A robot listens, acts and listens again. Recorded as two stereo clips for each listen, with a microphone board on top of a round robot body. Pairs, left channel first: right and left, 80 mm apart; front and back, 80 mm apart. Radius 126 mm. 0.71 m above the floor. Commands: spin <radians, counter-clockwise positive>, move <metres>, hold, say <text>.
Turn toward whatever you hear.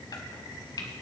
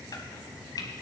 spin -0.79
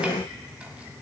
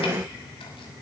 hold
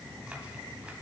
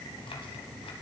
hold
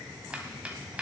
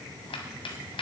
spin 0.26
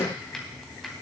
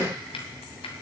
say Found it: chopping, straight ahead, 1 to 2 m away.